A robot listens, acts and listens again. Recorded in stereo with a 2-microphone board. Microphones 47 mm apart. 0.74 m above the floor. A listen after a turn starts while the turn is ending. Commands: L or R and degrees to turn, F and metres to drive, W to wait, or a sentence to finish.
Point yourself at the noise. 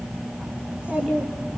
R30
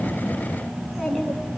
Facing the child speaking.